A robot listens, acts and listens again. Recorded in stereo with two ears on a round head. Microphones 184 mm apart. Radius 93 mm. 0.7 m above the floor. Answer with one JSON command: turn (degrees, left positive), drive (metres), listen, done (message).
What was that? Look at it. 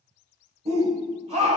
{"turn": -30}
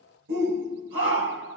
{"turn": -115}
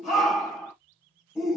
{"done": "Found it: a shout, straight ahead, 2 to 4 m away."}